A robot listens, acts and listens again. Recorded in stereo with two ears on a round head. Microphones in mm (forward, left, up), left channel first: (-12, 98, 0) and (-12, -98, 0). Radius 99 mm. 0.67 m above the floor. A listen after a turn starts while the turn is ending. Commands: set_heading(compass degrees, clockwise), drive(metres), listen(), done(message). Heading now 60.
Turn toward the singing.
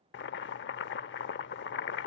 listen()
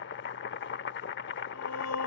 set_heading(330)
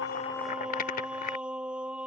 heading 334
done("Facing the singing.")